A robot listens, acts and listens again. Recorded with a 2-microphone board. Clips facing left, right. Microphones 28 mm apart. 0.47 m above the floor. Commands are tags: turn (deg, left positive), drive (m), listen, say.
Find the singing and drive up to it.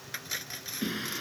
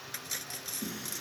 <turn deg="50"/>
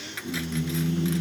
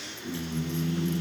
<drive m="1.0"/>
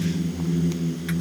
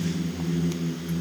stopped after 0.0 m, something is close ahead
<say>Blocked. The singing is further on, straight ahead.</say>